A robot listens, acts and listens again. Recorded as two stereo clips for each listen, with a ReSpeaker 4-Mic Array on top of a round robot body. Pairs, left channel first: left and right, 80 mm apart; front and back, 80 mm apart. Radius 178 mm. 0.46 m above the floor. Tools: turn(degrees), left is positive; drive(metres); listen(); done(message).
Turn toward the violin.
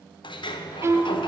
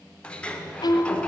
turn(degrees=-35)
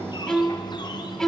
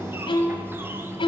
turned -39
done("Found it: a violin, straight ahead.")